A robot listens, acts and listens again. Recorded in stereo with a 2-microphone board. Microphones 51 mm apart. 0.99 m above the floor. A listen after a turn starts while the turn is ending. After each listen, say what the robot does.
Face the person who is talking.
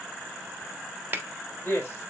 Turn 40° left.
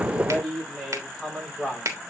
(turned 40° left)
Turn 10° left.
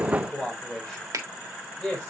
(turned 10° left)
Turn 15° left.
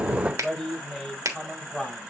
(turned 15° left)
Facing the man speaking.